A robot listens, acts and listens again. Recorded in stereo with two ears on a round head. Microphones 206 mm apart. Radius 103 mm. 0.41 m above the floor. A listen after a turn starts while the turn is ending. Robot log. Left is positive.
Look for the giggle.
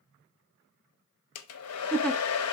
cmd yaw +30
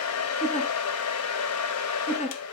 note: So it is at 150° left.
cmd yaw +150
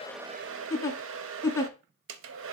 note: The giggle is now 15° left.
cmd yaw +15
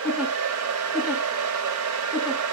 cmd idle
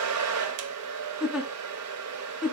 end: Facing the giggle, under 1 m away.